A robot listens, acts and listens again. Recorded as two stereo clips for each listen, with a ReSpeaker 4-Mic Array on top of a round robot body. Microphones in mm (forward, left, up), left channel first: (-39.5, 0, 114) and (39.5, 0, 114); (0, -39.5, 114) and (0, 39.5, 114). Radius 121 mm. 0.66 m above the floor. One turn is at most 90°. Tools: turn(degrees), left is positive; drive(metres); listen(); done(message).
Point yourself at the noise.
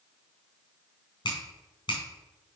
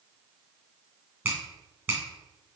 turn(degrees=90)
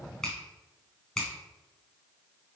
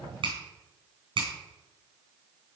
turn(degrees=90)
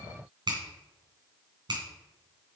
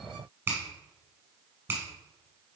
turn(degrees=25)
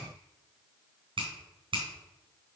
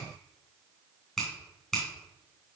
done("Found it: a finger snap, straight ahead, 2 to 4 m away.")